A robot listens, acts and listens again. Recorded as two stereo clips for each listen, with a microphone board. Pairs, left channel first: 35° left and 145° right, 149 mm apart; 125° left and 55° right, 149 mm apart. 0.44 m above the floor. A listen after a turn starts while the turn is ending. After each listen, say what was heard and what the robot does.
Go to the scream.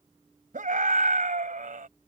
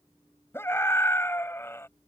The scream: 165° right. Turn 165° right.
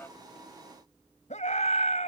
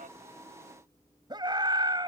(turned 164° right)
Drive 1.0 m forward.
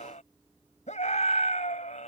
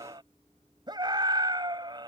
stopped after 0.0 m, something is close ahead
Something is in my way. I am facing the scream but have not reached it.